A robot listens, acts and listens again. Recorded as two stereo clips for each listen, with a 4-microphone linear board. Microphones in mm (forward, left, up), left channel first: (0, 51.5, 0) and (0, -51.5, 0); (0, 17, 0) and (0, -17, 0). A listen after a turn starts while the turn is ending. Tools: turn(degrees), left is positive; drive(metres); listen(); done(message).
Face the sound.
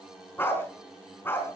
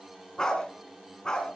turn(degrees=20)
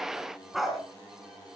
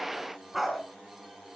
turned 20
done("Found it: a dog barking, straight ahead.")